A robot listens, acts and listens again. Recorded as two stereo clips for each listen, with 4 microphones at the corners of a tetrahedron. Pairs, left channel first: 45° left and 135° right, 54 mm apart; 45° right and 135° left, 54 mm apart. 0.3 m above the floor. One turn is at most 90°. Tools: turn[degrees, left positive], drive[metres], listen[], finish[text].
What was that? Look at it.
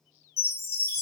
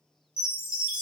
Thought: The chime: 65° left.
Action: turn[65]
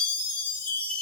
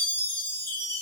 Thought: The chime is now 15° right.
Action: turn[-15]
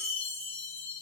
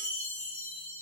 Action: finish[Facing the chime.]